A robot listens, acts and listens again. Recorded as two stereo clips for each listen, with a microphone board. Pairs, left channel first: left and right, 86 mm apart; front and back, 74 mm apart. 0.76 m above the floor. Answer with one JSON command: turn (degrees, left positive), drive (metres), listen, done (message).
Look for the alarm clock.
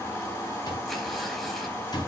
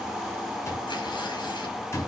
{"turn": 50}
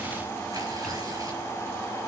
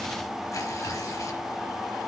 {"listen": true}
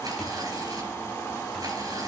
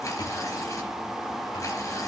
{"listen": true}
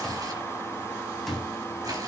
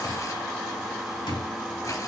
{"done": "Facing the alarm clock, 2 to 4 m away."}